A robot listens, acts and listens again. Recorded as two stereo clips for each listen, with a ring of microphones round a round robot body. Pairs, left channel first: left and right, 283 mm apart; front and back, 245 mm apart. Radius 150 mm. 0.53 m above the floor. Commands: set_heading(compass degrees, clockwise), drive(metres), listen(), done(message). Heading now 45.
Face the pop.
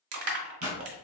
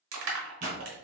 set_heading(280)
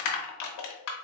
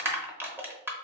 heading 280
done("I heard a pop from this way, but can't make it out now.")